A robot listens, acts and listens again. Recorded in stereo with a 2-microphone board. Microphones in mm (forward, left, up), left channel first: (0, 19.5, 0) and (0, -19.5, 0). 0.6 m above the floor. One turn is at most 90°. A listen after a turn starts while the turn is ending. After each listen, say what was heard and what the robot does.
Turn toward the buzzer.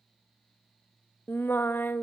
Keep listening.
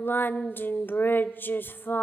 Keep listening.
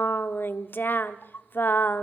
I can't make out a buzzer, only singing.